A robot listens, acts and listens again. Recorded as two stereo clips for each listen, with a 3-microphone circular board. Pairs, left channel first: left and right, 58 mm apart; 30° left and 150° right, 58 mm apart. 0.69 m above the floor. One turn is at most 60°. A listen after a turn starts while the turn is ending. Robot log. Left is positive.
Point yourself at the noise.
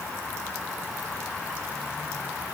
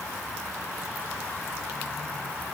cmd idle
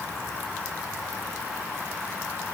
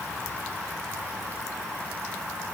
cmd idle
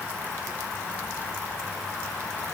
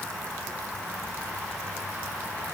end: I can't make out anything to turn to.